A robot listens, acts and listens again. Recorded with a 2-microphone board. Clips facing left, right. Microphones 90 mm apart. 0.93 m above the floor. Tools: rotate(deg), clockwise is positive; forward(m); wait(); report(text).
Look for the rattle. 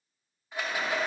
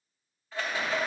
rotate(-15)
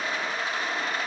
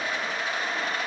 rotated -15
rotate(-145)
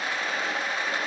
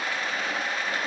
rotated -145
rotate(-25)
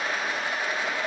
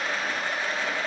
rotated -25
rotate(-10)
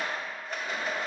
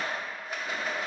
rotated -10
report("Facing the rattle.")